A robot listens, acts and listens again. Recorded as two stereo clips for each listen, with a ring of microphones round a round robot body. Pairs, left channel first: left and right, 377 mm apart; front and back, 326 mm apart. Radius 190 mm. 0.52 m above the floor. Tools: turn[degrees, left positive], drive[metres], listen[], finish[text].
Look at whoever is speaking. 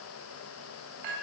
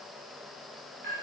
Action: listen[]
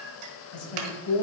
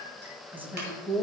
Thought: The woman speaking: 95° left.
Action: turn[95]
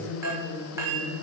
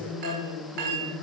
Thought: The woman speaking is now 35° left.
Action: turn[35]
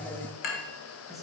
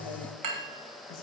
Action: listen[]
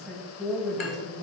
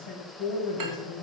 Action: finish[Facing the woman speaking.]